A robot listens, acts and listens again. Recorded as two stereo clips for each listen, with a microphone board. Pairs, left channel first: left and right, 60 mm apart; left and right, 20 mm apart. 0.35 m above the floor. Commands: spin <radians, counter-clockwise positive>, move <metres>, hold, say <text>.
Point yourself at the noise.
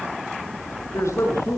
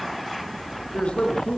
spin 1.05
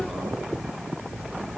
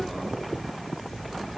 hold
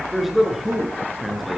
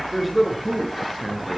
say Facing the man speaking, over 4 m away.